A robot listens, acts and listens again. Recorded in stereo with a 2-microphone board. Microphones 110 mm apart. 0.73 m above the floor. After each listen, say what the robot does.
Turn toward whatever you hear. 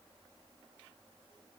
Keep listening.
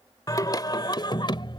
Turn 50° left.
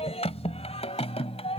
Turn 65° left.
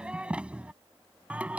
Turn 10° right.
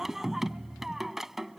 Found it: singing, straight ahead.